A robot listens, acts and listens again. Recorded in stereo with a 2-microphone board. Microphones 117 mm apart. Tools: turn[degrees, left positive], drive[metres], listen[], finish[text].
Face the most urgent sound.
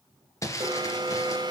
Thought: The alarm: about 40° right or 140° right.
Action: turn[-40]
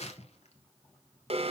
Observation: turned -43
Thought: So it is at 90° right.
Action: turn[-90]
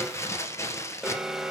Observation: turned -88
Action: finish[Facing the alarm, 1 to 2 m away.]